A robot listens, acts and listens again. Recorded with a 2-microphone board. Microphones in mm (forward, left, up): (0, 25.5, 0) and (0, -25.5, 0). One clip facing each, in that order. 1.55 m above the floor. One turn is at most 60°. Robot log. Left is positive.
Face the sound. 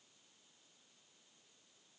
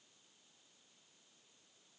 cmd idle
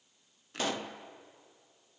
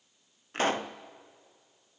note: The pop: about 40° right or 140° right.
cmd yaw -40
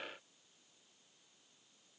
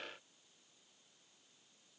cmd idle
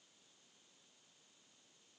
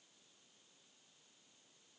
end: I heard a pop, but can't make it out now. It was about straight ahead or 100° right.